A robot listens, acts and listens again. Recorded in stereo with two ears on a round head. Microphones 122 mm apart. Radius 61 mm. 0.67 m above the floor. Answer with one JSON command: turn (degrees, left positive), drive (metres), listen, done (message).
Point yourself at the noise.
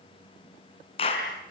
{"turn": 40}
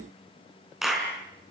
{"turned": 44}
{"done": "Found it: a clap, straight ahead, over 4 m away."}